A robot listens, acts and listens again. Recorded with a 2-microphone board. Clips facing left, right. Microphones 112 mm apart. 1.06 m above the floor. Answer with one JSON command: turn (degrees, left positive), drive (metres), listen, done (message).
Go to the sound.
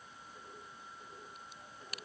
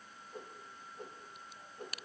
{"turn": -65}
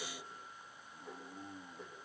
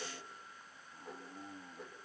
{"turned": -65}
{"drive": 1.0}
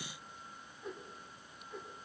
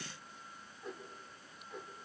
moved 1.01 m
{"drive": 1.0}
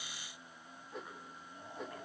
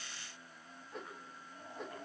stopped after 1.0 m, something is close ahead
{"done": "I am next to the whoosh."}